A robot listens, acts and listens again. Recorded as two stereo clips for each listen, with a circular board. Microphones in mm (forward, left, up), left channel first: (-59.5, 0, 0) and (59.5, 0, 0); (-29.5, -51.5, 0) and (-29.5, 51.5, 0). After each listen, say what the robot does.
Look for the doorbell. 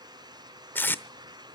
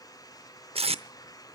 Keep listening.
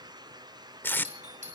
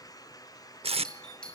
Turn 10° right.
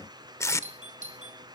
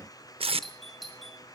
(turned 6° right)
Facing the doorbell.